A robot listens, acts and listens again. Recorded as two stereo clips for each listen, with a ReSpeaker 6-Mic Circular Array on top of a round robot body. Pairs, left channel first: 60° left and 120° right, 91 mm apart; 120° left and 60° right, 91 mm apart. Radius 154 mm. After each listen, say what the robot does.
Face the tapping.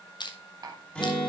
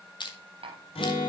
Turn 70° right.
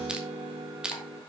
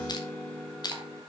Keep listening.
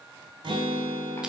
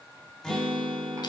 Keep listening.
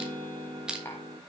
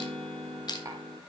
Facing where the tapping came from. I can't hear it now.